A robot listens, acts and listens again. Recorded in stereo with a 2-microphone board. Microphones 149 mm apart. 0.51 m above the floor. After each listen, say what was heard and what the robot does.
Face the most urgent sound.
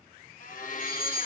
The fire alarm: about 30° left or 150° left. Turn 30° left.
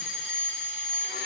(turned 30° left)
Found it: a fire alarm, straight ahead.